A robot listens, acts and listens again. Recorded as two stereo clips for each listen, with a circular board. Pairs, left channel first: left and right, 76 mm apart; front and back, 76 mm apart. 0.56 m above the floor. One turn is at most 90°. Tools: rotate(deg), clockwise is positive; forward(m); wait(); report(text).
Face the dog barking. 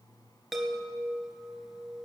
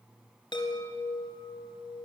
wait()
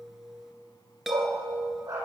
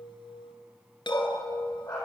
rotate(40)
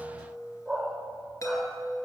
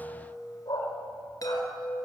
report("Facing the dog barking, over 4 m away.")